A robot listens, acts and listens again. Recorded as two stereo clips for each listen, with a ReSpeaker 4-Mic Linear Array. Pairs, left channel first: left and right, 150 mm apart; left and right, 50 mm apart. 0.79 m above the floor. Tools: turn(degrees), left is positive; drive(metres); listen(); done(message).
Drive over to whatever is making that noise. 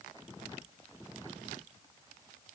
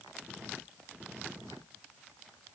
listen()
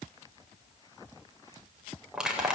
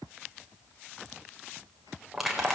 turn(degrees=-30)
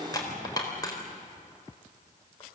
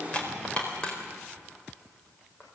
turn(degrees=25)
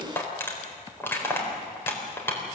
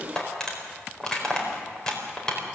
turn(degrees=15)
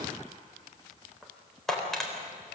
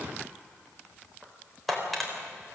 drive(metres=1.0)
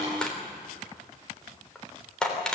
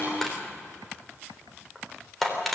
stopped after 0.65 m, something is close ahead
done("Something is in my way. I am facing the crushing but have not reached it.")